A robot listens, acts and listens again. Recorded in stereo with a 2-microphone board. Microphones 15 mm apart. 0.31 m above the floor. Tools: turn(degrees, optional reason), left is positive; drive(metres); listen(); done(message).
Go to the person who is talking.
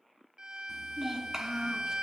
turn(degrees=-35, reason="The child speaking: about 35° right or 145° right.")
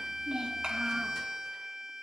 turn(degrees=-110, reason="So it is at 110° right.")
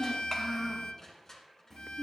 turn(degrees=25, reason="The child speaking is now 25° left.")
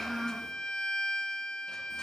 drive(metres=1.0)
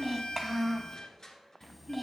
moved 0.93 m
drive(metres=1.0)
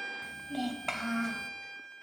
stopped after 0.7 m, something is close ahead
turn(degrees=-10, reason="The child speaking is now 10° right.")
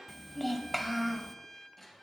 done("I am next to the child speaking.")